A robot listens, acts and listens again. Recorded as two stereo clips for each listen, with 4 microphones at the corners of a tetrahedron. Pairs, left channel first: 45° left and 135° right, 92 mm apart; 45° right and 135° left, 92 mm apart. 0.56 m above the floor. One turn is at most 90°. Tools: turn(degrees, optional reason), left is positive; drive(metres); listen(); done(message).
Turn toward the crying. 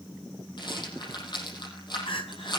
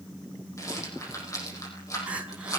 turn(degrees=60, reason="The crying: 60° left.")
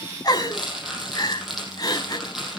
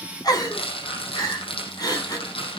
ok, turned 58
done("Facing the crying.")